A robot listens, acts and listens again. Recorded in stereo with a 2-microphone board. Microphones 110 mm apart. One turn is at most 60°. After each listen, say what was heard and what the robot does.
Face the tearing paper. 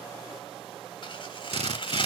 The tearing paper: about 50° left or 130° left. Turn 50° left.
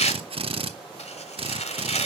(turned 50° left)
So it is at 80° left. Turn 60° left.
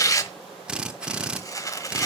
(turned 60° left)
The tearing paper is now 30° left. Turn 30° left.
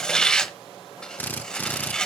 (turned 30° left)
Facing the tearing paper, 1 to 2 m away.